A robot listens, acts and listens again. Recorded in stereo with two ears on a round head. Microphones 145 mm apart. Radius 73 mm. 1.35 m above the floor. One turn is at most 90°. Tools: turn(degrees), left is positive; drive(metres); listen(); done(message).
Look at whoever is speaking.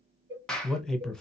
turn(degrees=30)
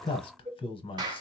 turn(degrees=90)
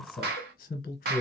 turn(degrees=55)
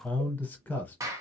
turn(degrees=10)
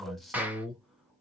done("Found it: a man speaking, straight ahead.")